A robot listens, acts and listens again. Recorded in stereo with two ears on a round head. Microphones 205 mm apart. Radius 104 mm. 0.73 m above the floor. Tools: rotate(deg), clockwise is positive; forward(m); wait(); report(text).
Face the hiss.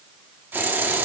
rotate(30)
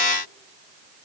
wait()
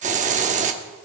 rotate(145)
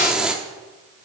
report("Facing the hiss.")